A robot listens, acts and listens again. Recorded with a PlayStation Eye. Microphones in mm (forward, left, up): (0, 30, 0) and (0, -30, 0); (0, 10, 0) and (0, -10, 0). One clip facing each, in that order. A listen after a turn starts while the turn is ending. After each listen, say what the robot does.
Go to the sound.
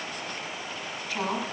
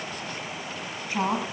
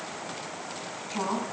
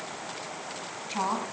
Turn 30° right.
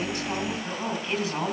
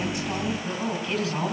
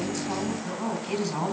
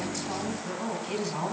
Drive 1.0 m forward.
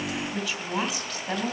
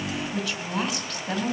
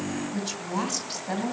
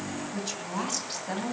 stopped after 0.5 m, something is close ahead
Something is in my way. I am facing the woman speaking but have not reached it.